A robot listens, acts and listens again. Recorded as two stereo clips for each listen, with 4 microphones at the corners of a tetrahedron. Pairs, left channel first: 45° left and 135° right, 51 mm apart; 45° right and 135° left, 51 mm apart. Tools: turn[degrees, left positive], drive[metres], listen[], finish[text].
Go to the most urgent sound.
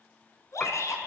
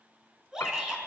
Thought: The shout: 60° left.
Action: turn[60]
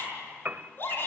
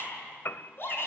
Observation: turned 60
Action: drive[1.0]
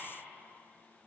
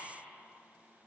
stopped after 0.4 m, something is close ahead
Action: listen[]
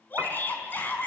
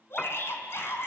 Thought: The shout is now 10° right.
Action: turn[-10]
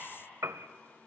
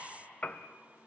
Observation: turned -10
Action: listen[]
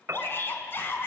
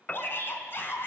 Action: finish[Blocked. The shout is further on, straight ahead.]